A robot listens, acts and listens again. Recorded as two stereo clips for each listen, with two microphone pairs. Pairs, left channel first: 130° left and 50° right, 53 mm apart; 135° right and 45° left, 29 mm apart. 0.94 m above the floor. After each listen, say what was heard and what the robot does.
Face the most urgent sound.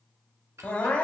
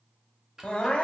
The crying: 175° right. Turn 175° right.
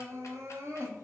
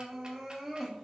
The crying is now 40° right. Turn 40° right.
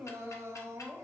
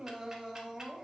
The crying is now 30° right. Turn 30° right.
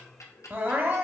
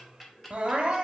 Facing the crying.